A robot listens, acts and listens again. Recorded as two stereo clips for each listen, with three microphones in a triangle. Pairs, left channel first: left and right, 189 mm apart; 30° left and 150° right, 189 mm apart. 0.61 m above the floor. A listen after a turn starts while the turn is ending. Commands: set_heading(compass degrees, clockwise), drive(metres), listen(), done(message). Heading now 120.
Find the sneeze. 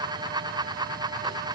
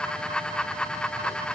listen()
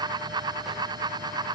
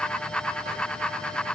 listen()
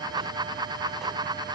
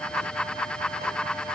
done("I can't make out a sneeze.")